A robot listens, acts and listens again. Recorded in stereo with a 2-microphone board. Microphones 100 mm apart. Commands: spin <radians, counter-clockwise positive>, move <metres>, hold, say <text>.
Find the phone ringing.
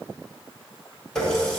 hold
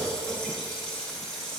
hold
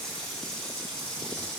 say I can't make out a phone ringing, only a running tap.